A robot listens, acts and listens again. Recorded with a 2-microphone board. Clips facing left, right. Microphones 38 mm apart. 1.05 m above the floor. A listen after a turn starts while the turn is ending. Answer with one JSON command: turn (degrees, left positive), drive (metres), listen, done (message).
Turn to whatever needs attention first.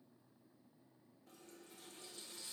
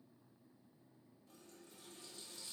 {"listen": true}
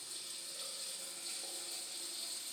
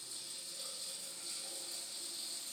{"listen": true}
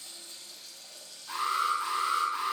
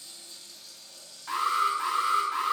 {"turn": -90}
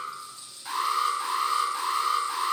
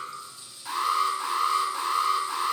{"done": "Facing the alarm."}